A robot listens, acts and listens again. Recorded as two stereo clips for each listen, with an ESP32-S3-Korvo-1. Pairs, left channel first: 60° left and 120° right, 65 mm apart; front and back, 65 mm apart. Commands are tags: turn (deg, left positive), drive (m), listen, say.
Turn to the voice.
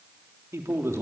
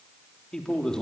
<turn deg="-80"/>
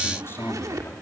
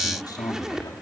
<turn deg="10"/>
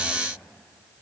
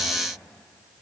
<listen/>
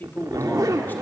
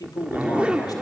<say>Facing the man speaking.</say>